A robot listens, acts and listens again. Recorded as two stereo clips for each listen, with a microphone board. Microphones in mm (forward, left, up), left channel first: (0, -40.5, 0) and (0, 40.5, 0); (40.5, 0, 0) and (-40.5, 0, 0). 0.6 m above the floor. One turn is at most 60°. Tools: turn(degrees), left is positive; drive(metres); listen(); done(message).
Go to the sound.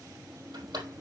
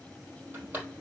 turn(degrees=60)
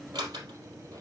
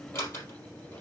turn(degrees=60)
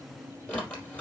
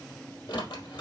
turn(degrees=-15)
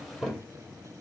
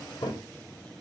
drive(metres=1.0)
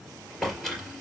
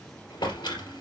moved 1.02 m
drive(metres=1.0)
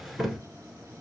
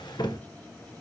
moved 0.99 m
drive(metres=1.0)
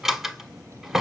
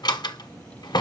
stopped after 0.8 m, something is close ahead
done("Arrived at the drawer, straight ahead.")